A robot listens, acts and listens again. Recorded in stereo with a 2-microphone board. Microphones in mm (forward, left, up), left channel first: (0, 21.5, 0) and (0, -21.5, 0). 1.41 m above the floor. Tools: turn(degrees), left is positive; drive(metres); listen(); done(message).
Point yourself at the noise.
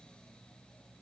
listen()
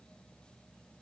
listen()
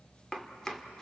turn(degrees=30)
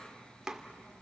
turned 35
turn(degrees=-15)
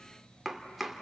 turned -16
done("Facing the chopping, 1 to 2 m away.")